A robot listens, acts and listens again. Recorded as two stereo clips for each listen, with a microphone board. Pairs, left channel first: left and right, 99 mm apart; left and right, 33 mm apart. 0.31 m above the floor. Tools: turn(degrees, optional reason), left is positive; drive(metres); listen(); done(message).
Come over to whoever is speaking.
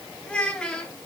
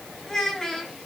turn(degrees=30)
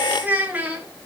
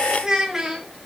turn(degrees=-20, reason="So it is at 20° right.")
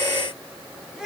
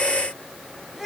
drive(metres=1.0)
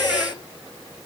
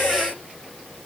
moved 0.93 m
listen()
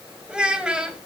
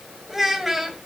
turn(degrees=-10, reason="The child speaking is now 10° right.")
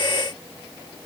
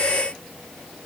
listen()
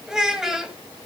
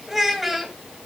drive(metres=1.0)
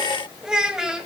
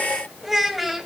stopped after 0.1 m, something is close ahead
turn(degrees=-10, reason="The child speaking is now 10° right.")
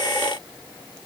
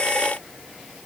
listen()
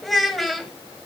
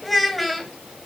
done("Arrived at the child speaking, straight ahead.")